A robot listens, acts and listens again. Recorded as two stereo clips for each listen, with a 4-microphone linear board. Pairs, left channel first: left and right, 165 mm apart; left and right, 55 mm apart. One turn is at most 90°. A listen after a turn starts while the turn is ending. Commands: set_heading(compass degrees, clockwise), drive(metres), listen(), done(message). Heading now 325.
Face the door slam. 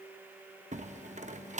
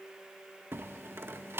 set_heading(10)
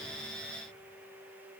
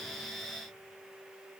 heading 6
listen()
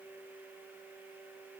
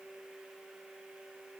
done("I heard a door slam, but can't make it out now. It was about 5° right or 95° right.")